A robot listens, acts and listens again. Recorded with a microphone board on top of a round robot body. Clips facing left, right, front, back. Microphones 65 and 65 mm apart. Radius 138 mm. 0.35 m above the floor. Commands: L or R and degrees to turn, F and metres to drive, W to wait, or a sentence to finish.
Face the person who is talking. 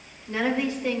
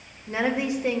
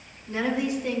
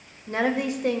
R155
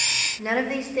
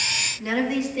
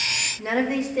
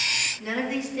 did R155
L40
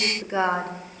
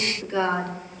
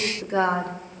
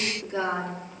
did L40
L25
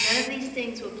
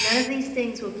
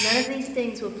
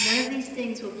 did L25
R25
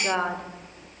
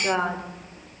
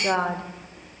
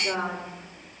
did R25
Facing the woman speaking.